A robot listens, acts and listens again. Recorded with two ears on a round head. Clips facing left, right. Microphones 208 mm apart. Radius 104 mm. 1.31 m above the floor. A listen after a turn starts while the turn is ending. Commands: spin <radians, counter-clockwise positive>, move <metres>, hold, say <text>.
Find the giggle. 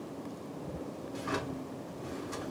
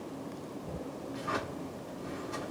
hold
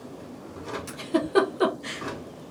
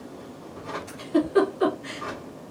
spin 1.05
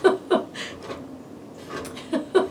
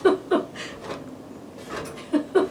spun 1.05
spin 0.96
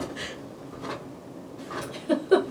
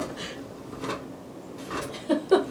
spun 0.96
spin 0.17
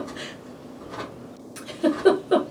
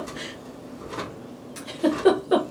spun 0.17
say Facing the giggle, 1 to 2 m away.